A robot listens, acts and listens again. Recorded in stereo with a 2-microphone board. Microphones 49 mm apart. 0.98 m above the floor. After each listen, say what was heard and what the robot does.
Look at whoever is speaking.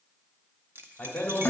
The man speaking: about 35° left or 145° left. Turn 35° left.
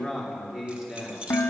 So it is at 20° right. Turn 20° right.
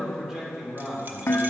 The man speaking is now 15° right. Turn 15° right.
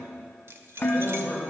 The man speaking is now 10° right. Turn 10° right.
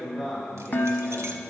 Found it: a man speaking, straight ahead, 2 to 4 m away.